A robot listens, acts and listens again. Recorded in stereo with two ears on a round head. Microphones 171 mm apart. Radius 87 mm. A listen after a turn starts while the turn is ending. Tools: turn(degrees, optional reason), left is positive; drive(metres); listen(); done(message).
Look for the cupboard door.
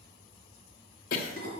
listen()
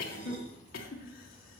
listen()
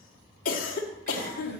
done("I can't make out a cupboard door to turn to.")